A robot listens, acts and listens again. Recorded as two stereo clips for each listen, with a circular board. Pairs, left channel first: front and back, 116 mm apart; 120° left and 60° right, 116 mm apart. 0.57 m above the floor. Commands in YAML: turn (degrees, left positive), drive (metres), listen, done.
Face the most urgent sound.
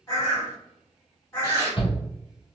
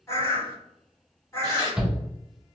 turn: 25
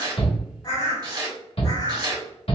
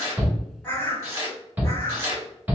turn: 10
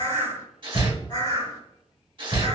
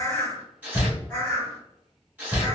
done: "Found it: a shout, straight ahead."